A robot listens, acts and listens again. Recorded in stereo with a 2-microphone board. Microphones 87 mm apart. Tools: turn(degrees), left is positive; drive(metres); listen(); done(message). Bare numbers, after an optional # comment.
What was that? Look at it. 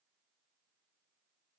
listen()
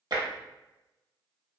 # The tapping: about 55° right or 125° right.
turn(-55)
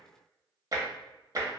# So it is at 55° right.
turn(-55)
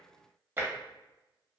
# The tapping is now 30° right.
turn(-30)
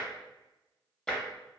# The tapping is now 10° left.
turn(10)
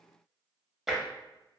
done("Facing the tapping.")